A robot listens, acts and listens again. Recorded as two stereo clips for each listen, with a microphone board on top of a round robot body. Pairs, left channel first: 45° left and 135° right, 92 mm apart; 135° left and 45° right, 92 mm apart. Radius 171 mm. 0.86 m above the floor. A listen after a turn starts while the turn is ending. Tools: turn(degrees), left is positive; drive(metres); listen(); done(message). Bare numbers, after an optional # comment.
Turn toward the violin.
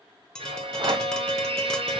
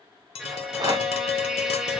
# The violin: 130° right.
turn(-130)
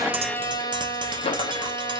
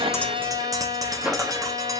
done("Found it: a violin, straight ahead, 1 to 2 m away.")